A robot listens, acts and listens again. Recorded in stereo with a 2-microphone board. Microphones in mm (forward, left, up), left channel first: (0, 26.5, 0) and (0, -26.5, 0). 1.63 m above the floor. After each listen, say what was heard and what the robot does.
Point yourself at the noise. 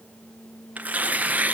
The tearing paper: about 30° right or 150° right. Turn 30° right.
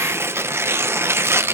So it is at 120° right. Turn 120° right.
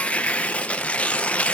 The tearing paper is now 25° left. Turn 25° left.
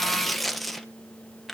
Found it: tearing paper, straight ahead, under 1 m away.